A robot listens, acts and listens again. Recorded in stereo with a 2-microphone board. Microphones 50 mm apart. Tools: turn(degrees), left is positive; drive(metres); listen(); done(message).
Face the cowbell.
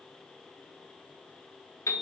listen()
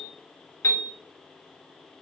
listen()
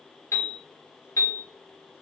done("I can't make out a cowbell, only a piano.")